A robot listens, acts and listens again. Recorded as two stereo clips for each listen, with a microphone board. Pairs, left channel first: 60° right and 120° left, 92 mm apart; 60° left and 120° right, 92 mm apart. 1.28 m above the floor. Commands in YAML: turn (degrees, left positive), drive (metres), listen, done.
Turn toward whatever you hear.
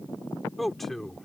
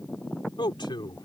turn: 25
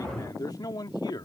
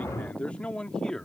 turn: -20
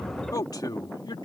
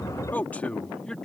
turn: -20
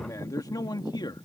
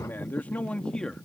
turn: -25
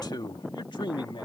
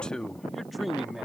turn: -35
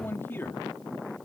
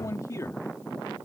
done: "Facing the man speaking."